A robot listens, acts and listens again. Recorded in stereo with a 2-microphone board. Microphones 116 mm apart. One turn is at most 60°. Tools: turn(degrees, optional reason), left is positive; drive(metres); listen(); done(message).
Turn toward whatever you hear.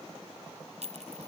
turn(degrees=-60, reason="The clink: about 75° right or 105° right.")
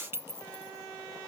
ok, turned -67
turn(degrees=-20, reason="So it is at 20° right.")
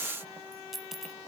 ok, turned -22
done("Facing the clink.")